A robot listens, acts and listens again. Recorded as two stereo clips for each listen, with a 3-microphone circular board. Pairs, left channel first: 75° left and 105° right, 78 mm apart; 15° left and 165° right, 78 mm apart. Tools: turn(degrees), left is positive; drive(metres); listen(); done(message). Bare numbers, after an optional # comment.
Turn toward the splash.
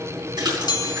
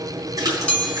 # The splash: 130° right.
turn(-130)
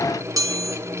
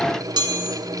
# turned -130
done("Facing where the splash came from. I can't hear it now.")